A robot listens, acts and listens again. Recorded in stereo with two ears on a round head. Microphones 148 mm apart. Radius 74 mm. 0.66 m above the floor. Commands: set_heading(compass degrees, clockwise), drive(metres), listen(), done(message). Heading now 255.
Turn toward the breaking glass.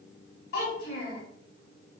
listen()
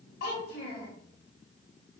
listen()
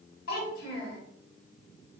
done("I can't make out breaking glass, only a child speaking.")